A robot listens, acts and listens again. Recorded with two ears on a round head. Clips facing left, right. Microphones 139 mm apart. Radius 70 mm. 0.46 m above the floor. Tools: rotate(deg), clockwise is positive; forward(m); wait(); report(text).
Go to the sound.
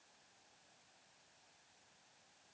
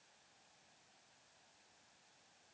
wait()
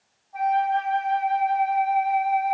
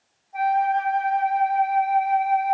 rotate(20)
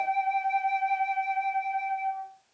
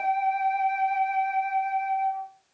forward(1.0)
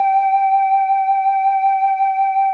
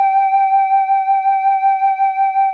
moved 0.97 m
forward(1.0)
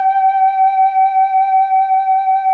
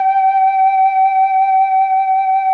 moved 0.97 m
rotate(20)
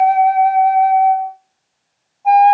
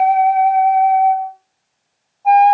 forward(1.0)
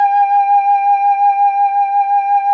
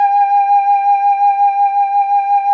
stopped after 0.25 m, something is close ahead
rotate(10)
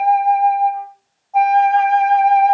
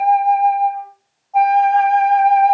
report("I am next to the flute.")